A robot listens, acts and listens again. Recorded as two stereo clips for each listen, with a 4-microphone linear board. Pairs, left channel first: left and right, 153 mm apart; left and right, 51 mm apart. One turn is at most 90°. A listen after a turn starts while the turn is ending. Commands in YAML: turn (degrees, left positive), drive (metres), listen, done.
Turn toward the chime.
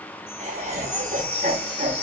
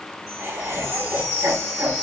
turn: 90
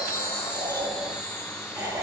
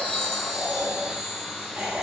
done: "Facing the chime, 1 to 2 m away."